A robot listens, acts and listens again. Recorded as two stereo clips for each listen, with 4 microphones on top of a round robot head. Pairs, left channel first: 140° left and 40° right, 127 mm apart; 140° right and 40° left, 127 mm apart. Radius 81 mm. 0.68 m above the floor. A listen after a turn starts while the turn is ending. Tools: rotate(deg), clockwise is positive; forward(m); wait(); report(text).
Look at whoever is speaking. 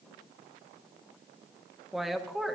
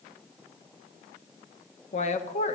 rotate(130)
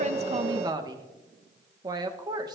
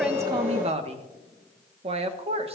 rotate(-15)
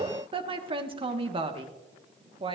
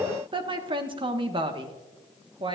report("Found it: a woman speaking, straight ahead, 1 to 2 m away.")